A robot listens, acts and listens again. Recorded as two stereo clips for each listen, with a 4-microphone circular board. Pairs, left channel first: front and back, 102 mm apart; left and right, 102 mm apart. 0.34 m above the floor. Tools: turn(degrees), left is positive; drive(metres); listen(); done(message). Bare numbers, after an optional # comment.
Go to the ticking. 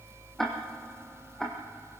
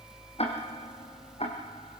# The ticking: 85° left.
turn(85)
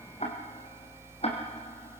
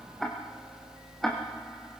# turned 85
drive(1.0)
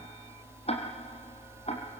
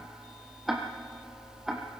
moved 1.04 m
drive(1.0)
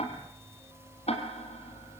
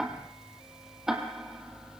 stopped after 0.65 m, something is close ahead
done("Something is in my way. I am facing the ticking but have not reached it.")